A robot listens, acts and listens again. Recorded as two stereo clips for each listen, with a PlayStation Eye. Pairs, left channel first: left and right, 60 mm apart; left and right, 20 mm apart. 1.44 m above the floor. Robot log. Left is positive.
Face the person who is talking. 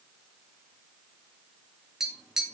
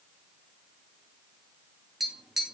cmd idle
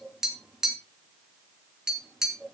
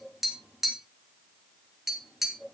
cmd idle
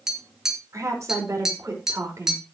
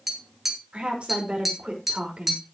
note: The woman speaking: about 60° right or 120° right.
cmd yaw -60
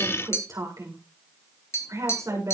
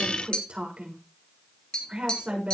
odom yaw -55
note: So it is at 65° right.
cmd yaw -65
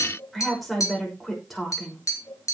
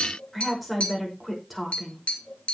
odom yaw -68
end: Facing the woman speaking, over 4 m away.